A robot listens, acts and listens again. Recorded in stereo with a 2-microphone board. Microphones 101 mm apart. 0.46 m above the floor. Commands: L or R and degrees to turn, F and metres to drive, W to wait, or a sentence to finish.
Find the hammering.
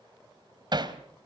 R45
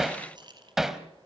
Facing the hammering.